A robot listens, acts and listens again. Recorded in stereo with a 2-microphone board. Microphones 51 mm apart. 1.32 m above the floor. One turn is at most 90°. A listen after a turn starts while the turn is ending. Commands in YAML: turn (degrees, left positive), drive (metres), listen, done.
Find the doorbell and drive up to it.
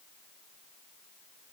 listen: true
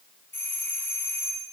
turn: 40
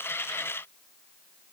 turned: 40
listen: true
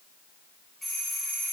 drive: 1.0
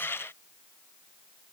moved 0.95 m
listen: true
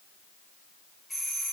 drive: 1.0
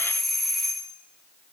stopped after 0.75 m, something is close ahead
done: "I am next to the doorbell."